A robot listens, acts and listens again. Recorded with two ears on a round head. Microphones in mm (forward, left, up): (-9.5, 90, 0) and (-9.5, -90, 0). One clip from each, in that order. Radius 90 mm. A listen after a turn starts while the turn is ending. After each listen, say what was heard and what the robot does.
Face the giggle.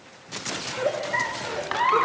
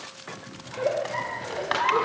The giggle: about 65° left or 115° left. Turn 65° left.
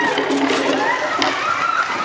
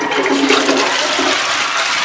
Keep listening.
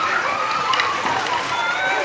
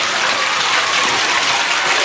Keep listening.
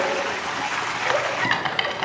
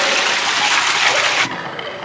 I heard a giggle, but can't make it out now. It was about straight ahead or 50° left.